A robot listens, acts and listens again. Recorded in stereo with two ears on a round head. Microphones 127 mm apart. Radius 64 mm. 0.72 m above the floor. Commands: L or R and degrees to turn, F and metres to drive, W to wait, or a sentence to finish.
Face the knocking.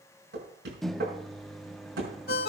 R90
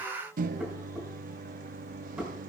R10
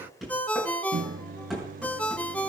Found it: knocking, straight ahead, over 4 m away.